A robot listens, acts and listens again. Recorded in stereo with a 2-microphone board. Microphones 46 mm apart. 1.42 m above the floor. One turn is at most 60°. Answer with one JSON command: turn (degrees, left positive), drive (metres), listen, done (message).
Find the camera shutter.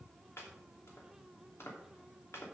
{"listen": true}
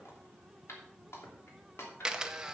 {"turn": -30}
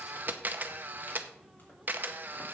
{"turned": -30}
{"turn": -60}
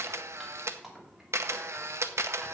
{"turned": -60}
{"turn": -60}
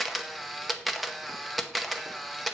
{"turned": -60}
{"done": "Found it: a camera shutter, straight ahead, under 1 m away."}